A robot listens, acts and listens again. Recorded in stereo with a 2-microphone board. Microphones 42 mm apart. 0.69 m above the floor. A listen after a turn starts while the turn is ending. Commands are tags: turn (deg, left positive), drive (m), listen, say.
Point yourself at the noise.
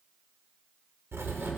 <turn deg="-70"/>
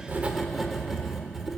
<say>Found it: writing, straight ahead.</say>